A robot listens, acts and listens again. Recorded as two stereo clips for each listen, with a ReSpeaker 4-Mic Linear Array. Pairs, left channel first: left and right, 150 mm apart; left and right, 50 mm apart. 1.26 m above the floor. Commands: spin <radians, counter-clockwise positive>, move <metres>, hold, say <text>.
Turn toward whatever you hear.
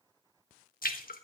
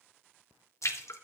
spin 1.31
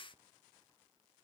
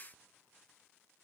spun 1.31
hold
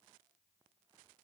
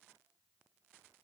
say I heard a splash, but can't make it out now. It was about straight ahead or 30° left.